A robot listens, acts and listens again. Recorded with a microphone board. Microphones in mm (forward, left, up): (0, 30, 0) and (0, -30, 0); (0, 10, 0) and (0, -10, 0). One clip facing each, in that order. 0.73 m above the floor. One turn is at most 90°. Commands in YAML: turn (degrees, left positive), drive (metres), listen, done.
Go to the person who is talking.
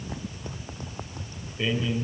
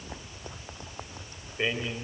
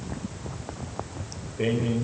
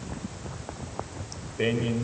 turn: -30
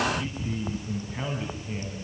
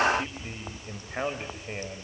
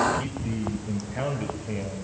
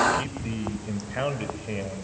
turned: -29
turn: -90
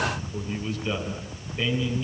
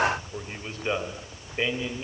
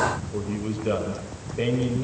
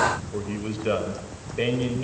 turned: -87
turn: -35
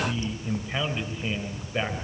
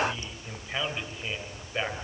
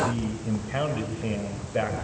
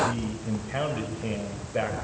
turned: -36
drive: 1.0
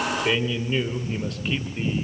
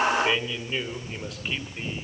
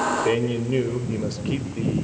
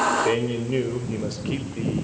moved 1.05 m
drive: 1.0
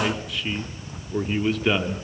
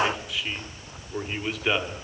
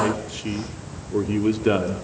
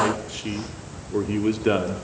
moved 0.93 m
drive: 1.0
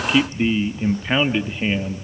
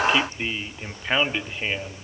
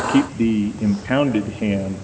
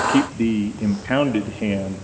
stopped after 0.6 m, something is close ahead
done: "I am next to the man speaking."